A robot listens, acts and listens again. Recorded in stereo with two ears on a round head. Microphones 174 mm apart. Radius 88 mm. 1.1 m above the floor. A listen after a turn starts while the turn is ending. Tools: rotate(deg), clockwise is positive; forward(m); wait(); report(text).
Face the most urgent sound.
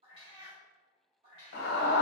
rotate(-60)
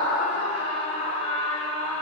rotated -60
rotate(-40)
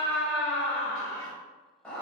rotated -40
rotate(-10)
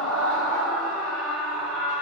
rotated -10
report("Facing the scream.")